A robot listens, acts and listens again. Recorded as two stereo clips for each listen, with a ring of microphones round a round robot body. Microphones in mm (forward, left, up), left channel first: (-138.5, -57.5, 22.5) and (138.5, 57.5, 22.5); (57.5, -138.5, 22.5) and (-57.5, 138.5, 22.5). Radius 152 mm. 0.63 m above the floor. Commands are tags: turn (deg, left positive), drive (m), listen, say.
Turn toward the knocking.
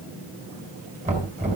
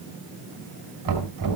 <turn deg="90"/>
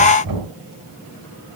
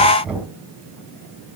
<turn deg="25"/>
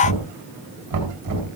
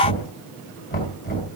<say>Found it: knocking, straight ahead.</say>